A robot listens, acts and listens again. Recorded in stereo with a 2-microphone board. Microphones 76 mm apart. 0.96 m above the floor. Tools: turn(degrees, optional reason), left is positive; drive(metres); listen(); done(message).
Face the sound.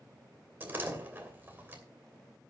turn(degrees=-25, reason="The door slam: about 25° right or 155° right.")
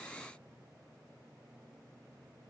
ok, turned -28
listen()
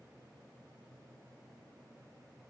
done("I heard a door slam, but can't make it out now. It was about straight ahead or 125° right.")